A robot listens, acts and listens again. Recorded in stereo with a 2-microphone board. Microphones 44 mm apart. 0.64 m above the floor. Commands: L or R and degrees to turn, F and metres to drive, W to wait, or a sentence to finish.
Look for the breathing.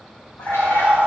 R35
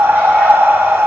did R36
R105
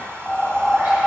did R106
Facing the breathing.